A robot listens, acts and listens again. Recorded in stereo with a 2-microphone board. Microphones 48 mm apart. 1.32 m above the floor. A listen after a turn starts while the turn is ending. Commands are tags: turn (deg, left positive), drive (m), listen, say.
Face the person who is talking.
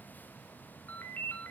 <listen/>
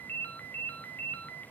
<listen/>
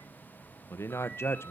<turn deg="55"/>
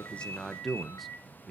<say>Facing the man speaking.</say>